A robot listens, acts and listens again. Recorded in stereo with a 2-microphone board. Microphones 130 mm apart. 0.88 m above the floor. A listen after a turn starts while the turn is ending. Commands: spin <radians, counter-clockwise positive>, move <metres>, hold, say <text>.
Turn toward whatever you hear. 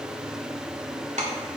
spin -1.22
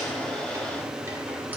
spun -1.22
hold
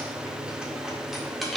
say Facing the keys jangling, 1 to 2 m away.